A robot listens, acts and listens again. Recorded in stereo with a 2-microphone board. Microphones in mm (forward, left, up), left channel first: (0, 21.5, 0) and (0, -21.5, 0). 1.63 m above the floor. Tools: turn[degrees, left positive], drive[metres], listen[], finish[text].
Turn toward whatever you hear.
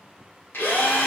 Thought: The drill: about 55° left or 125° left.
Action: turn[55]
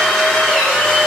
Action: finish[Facing the drill.]